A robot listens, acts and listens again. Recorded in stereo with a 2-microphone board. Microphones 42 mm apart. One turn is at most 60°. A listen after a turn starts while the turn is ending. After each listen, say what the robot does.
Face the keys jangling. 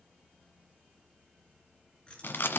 Turn 25° left.
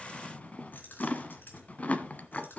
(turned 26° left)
Turn 60° left.
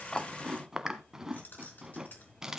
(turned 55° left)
Turn 50° left.
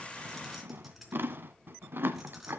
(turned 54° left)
Found it: keys jangling, straight ahead.